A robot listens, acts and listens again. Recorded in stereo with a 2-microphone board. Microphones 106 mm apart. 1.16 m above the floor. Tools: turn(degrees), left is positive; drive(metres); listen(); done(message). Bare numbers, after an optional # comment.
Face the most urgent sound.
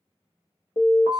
# The alarm: about 70° left or 110° left.
turn(70)
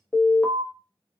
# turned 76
done("Facing the alarm, under 1 m away.")